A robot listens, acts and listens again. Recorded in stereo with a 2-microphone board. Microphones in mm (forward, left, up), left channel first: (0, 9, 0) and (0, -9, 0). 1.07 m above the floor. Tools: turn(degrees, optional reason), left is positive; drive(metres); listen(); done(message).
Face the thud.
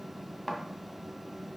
turn(degrees=15, reason="The thud: about 15° left or 165° left.")
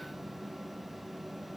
listen()
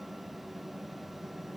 done("I heard a thud, but can't make it out now. It was about straight ahead or 150° left.")